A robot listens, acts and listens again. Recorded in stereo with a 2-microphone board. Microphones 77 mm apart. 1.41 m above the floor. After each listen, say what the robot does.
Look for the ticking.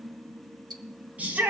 Turn 70° right.
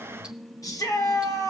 Keep listening.
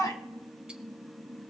Keep listening.
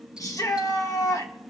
I heard ticking, but can't make it out now. It was about straight ahead or 40° right.